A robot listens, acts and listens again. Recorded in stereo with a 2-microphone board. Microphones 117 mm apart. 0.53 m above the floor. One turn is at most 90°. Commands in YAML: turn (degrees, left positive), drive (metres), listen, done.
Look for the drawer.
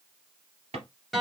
turn: -70
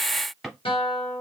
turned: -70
done: "Found it: a drawer, straight ahead, 2 to 4 m away."